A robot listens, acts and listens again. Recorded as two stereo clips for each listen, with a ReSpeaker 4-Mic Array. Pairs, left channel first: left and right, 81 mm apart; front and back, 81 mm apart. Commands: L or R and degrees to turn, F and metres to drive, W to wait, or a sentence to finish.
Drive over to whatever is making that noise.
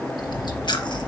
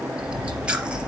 L105
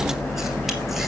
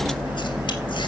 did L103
F1.0
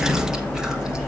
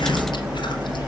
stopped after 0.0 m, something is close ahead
Blocked. The chewing is further on, straight ahead.